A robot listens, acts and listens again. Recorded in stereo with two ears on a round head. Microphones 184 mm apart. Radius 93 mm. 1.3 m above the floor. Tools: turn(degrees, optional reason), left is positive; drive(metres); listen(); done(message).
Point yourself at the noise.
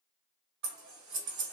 turn(degrees=-60, reason="The scissors: about 60° right or 120° right.")
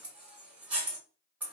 done("Found it: scissors, straight ahead.")